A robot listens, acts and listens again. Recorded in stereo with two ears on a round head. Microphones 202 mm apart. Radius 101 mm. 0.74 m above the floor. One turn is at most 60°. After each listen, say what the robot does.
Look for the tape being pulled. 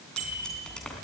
Turn 30° left.
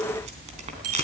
Turn 30° right.
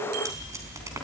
Turn 15° right.
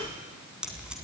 Facing the tape being pulled.